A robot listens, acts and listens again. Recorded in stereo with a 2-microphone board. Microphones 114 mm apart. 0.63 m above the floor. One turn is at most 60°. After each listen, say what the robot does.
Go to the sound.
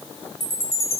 Turn 20° left.
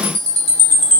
Drive 1.0 m forward.
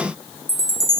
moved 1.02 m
Drive 1.0 m forward.
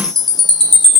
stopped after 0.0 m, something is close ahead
I am next to the chime.